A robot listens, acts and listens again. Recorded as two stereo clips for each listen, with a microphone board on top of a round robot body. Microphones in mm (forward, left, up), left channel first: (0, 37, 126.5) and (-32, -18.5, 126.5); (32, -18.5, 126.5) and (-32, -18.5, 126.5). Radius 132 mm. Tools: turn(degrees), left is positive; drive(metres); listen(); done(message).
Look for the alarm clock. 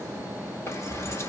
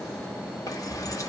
listen()
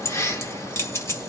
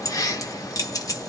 listen()
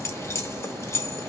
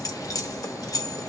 done("I can't make out an alarm clock, only keys jangling.")